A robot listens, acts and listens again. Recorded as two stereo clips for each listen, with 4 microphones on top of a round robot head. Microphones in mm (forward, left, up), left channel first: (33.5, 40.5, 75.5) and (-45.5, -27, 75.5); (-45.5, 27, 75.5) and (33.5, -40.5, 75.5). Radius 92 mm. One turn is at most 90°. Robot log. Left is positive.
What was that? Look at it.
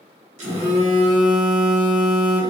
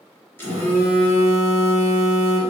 note: The phone buzzing: 150° right.
cmd yaw -90
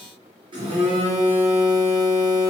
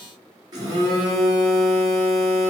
note: The phone buzzing is now 95° right.
cmd yaw -90
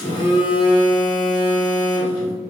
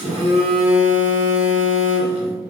note: The phone buzzing is now 10° right.
cmd yaw -10
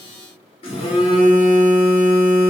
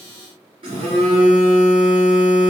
end: Found it: a phone buzzing, straight ahead.